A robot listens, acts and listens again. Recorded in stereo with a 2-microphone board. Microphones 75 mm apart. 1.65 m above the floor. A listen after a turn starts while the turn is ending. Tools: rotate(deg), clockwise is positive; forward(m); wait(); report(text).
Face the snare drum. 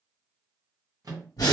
wait()
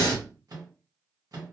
wait()
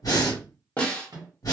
rotate(-20)
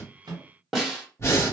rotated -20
report("Facing the snare drum.")